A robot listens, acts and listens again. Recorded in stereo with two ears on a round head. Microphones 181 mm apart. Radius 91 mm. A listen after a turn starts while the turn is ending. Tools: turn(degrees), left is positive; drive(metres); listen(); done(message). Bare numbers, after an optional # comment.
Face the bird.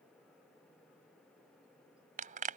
listen()
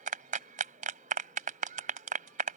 listen()
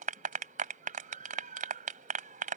done("I can't make out a bird, only a clap.")